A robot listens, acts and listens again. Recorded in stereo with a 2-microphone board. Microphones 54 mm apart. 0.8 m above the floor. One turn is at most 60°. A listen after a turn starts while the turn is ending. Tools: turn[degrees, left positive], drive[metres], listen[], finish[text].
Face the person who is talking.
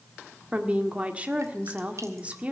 Thought: The woman speaking: about 25° right or 155° right.
Action: turn[-25]
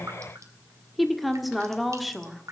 Action: finish[Found it: a woman speaking, straight ahead, 1 to 2 m away.]